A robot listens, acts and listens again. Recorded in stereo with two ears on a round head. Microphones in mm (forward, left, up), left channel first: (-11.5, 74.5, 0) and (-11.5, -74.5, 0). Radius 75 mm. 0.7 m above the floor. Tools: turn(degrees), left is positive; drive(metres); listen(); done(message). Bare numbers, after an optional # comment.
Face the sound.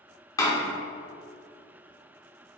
# The door slam: about 20° left or 160° left.
turn(20)
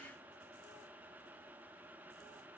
listen()
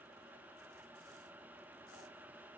done("I heard a door slam, but can't make it out now. It was about straight ahead or 140° left.")